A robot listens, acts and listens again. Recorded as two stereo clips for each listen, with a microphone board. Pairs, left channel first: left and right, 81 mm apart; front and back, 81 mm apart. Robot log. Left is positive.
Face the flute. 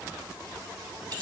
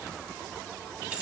cmd idle
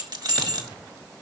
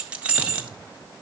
cmd idle
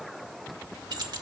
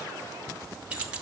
end: I can't make out a flute to turn to.